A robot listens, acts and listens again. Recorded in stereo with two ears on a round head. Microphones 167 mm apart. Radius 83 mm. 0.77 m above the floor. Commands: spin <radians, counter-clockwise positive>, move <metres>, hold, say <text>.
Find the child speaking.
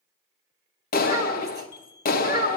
spin -0.44
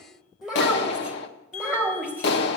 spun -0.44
spin -0.17
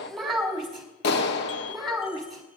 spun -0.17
say Facing the child speaking, over 4 m away.